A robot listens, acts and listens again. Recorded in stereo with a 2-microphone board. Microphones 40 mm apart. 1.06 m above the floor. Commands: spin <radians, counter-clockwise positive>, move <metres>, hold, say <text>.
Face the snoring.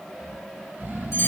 spin -0.96
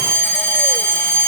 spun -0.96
hold
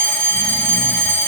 hold
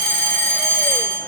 say I heard snoring, but can't make it out now. It was about straight ahead or 70° right.